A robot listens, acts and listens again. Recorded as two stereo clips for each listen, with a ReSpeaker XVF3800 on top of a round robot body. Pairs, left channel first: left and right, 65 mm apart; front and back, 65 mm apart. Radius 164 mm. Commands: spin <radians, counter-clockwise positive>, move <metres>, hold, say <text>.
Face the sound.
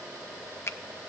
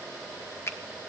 spin 0.79
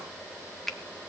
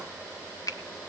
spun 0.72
say Found it: a finger snap, straight ahead, 2 to 4 m away.